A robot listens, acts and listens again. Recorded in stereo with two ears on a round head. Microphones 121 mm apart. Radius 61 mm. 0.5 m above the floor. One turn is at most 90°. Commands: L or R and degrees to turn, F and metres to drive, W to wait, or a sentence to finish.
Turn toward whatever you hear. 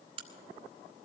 R40
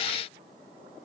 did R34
W
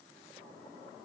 I heard a crack, but can't make it out now. It was about 5° right or 105° right.